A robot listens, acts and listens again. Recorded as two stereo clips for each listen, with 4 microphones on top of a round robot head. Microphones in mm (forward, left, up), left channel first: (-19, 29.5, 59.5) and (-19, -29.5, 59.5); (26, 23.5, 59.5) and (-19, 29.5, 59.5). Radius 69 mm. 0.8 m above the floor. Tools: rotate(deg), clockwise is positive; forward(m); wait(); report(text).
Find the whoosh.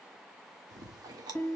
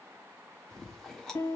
wait()
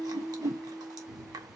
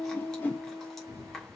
rotate(55)
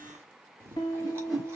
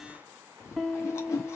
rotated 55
report("Found it: a whoosh, straight ahead.")